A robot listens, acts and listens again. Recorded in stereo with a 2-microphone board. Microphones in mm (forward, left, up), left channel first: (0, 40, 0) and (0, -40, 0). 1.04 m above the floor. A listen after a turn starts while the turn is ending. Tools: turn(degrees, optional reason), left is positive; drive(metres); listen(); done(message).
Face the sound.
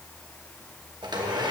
turn(degrees=-70, reason="The blender: about 70° right or 110° right.")
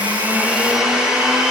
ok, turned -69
turn(degrees=-10, reason="So it is at 10° right.")
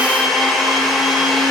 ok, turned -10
done("Found it: a blender, straight ahead, 1 to 2 m away.")